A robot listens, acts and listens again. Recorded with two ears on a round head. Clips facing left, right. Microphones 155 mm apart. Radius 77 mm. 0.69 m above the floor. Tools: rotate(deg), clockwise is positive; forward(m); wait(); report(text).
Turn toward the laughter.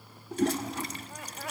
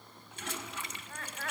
rotate(-30)
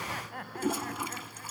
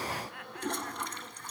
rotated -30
rotate(-145)
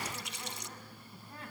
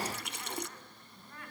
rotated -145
rotate(-20)
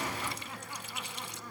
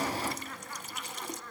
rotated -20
rotate(-10)
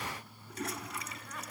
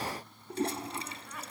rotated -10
wait()
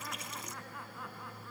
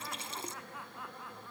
report("Found it: laughter, straight ahead, over 4 m away.")